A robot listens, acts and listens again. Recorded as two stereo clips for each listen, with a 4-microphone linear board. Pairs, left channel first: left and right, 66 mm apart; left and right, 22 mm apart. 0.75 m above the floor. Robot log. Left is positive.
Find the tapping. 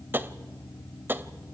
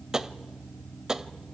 note: The tapping: about 30° right or 150° right.
cmd yaw -30
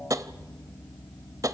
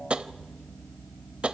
note: So it is at 120° right.
cmd yaw -120
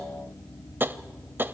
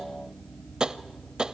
note: The tapping is now 35° right.
cmd yaw -35
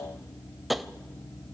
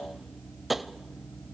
end: Found it: tapping, straight ahead.